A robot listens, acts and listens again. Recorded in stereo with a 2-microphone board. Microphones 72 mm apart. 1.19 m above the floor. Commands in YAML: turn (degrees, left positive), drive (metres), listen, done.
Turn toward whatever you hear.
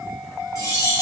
turn: 55
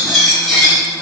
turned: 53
done: "Facing the cutlery clinking."